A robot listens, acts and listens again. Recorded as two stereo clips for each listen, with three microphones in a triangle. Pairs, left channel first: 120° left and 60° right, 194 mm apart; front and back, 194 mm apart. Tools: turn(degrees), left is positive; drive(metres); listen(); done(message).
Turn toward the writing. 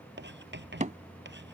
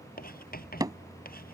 turn(degrees=-40)
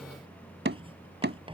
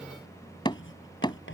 done("Found it: writing, straight ahead.")